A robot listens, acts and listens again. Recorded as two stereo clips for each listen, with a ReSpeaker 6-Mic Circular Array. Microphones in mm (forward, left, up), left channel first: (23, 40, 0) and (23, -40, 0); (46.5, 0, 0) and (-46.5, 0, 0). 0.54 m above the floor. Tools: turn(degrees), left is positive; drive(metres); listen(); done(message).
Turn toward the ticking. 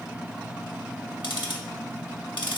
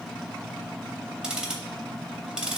turn(degrees=100)
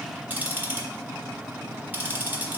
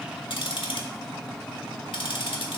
turn(degrees=-25)
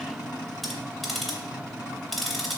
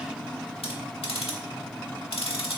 done("Found it: ticking, straight ahead.")